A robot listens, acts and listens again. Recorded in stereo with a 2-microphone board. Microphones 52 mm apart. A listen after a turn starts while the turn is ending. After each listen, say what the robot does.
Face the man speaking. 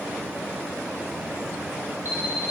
Keep listening.
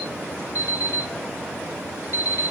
Keep listening.
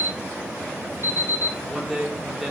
Turn 30° right.
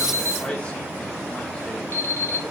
Turn 20° left.
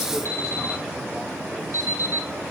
Keep listening.
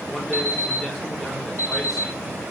Keep listening.
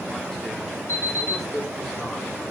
Found it: a man speaking, straight ahead.